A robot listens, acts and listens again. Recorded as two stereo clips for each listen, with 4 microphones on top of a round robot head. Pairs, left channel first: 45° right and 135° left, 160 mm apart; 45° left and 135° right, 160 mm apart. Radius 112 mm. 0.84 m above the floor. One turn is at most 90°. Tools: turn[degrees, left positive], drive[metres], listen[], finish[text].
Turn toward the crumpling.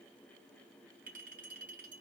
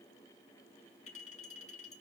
Action: listen[]
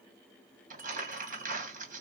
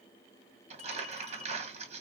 Thought: The crumpling: 175° left.
Action: turn[90]
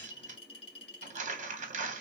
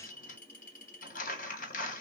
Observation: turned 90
Thought: The crumpling is now 85° left.
Action: turn[85]
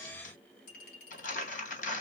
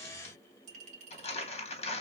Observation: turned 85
Action: finish[Facing the crumpling, 1 to 2 m away.]